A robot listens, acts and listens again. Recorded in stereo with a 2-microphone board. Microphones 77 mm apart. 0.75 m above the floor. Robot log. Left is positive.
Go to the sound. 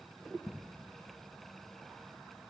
cmd idle
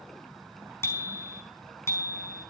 note: The bicycle bell: about 35° left or 145° left.
cmd yaw +35
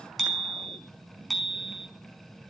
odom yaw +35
cmd fwd 1.0
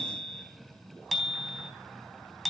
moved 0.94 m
cmd fwd 1.0
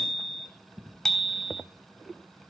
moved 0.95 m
cmd fwd 1.0
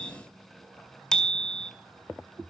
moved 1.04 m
note: The bicycle bell is now 10° left.
cmd yaw +10
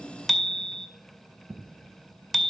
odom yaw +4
cmd fwd 1.0
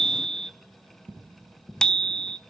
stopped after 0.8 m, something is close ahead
note: The bicycle bell is now 10° left.
cmd yaw +10
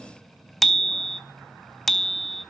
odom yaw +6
end: I am next to the bicycle bell.